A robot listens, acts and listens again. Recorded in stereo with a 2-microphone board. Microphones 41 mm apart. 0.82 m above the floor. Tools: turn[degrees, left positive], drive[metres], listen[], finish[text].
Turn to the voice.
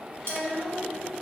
Action: turn[-30]
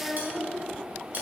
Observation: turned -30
Thought: So it is at 10° left.
Action: turn[10]
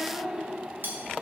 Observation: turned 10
Thought: The child speaking is now 15° right.
Action: turn[-15]
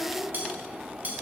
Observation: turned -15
Thought: The child speaking is now 15° right.
Action: turn[-15]
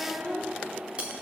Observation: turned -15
Thought: The child speaking is now 10° right.
Action: turn[-10]
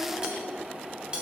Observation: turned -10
Thought: The child speaking is now 10° right.
Action: turn[-10]
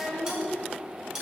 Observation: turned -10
Action: finish[Facing the child speaking.]